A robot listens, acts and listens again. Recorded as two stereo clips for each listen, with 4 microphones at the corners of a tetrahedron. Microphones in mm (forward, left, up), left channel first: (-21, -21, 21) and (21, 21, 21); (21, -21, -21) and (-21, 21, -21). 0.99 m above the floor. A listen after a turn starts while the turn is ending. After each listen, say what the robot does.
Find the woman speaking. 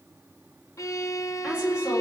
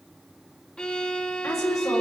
Turn 25° right.
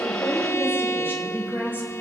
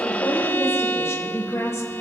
Turn 15° right.
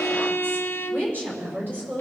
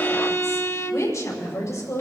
Turn 10° right.
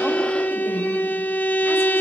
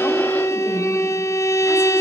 Keep listening.
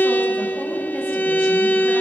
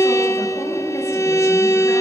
Keep listening.
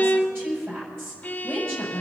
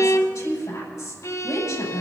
Found it: a woman speaking, straight ahead, over 4 m away.